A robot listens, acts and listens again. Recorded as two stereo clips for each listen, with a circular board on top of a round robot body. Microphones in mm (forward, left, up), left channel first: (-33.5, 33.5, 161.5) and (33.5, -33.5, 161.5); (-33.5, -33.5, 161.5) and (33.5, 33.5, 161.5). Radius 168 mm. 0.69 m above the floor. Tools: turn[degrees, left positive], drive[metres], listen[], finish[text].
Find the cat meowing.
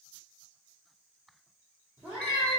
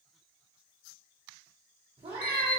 Thought: The cat meowing: 30° left.
Action: turn[30]
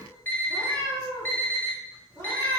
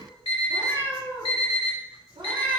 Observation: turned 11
Thought: The cat meowing is now 10° left.
Action: turn[10]
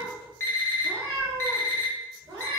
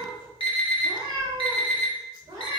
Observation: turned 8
Action: finish[Facing the cat meowing.]